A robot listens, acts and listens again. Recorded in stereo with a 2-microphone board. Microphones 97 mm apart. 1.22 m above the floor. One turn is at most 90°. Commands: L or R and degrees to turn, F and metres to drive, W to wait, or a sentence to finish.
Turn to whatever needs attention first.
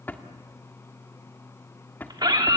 R45
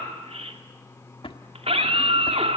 R90
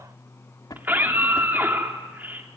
R20
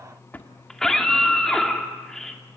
Facing the scream, 2 to 4 m away.